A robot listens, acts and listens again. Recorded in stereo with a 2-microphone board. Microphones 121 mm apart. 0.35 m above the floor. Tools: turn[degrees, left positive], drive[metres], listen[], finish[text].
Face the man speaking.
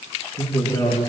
Thought: The man speaking: about 35° left or 145° left.
Action: turn[35]
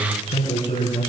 Thought: So it is at 105° left.
Action: turn[105]
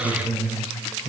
Thought: The man speaking is now 15° right.
Action: turn[-15]
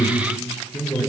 Action: finish[Facing the man speaking, over 4 m away.]